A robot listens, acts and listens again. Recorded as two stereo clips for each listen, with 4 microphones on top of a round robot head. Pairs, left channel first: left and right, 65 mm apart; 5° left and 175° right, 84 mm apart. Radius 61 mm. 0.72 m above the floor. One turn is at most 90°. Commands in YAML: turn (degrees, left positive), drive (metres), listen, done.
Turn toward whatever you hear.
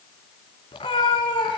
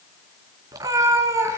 turn: 90
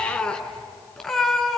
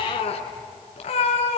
done: "Found it: a cat meowing, straight ahead."